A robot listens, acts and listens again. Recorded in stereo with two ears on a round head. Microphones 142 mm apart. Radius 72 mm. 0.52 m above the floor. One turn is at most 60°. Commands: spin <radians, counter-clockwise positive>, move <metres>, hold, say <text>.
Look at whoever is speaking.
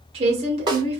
spin -0.70
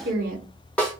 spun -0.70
spin -1.05
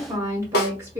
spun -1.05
spin -0.35
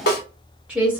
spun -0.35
spin -0.17
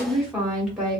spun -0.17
say Facing the woman speaking, 1 to 2 m away.